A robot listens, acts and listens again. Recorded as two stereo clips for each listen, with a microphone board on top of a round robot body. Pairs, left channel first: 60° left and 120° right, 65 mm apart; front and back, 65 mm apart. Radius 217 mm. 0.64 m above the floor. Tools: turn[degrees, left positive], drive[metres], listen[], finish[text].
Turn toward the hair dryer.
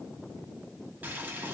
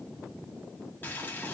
Action: listen[]
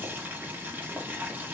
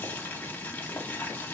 Action: listen[]
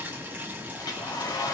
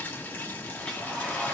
Thought: The hair dryer: 75° left.
Action: turn[75]
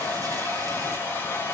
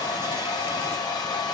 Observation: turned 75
Action: finish[Facing the hair dryer.]